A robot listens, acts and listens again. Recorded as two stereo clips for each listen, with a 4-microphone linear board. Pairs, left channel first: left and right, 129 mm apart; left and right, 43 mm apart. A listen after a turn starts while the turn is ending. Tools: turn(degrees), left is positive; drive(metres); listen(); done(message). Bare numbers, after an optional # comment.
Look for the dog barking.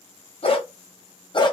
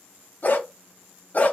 # The dog barking: about 40° left or 140° left.
turn(40)
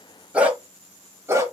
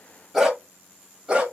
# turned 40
# So it is at 25° right.
turn(-25)
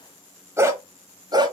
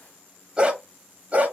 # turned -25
# The dog barking is now 35° right.
turn(-35)
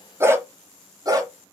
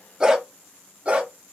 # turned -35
# The dog barking is now 30° right.
turn(-30)
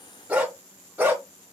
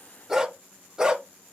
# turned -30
# The dog barking is now 15° right.
turn(-15)
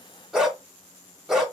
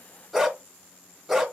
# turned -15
done("Found it: a dog barking, straight ahead, 1 to 2 m away.")